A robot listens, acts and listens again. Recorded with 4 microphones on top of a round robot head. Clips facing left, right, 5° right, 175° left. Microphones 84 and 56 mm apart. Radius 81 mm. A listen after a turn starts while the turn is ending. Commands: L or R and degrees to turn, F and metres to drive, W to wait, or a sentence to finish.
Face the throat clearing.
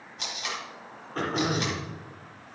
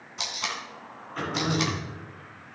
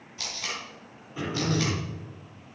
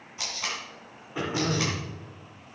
L140
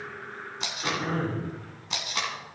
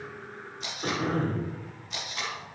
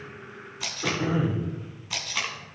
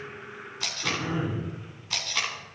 R25
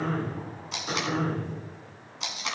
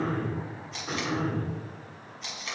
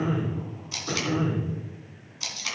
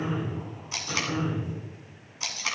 Found it: throat clearing, straight ahead, over 4 m away.